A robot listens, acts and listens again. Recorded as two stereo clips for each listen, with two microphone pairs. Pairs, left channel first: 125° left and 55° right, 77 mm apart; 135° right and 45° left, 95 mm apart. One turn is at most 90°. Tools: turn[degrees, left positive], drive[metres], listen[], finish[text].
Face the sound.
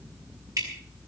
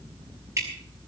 Thought: The dripping: 15° right.
Action: turn[-15]
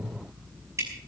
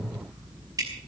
Action: finish[Facing the dripping, over 4 m away.]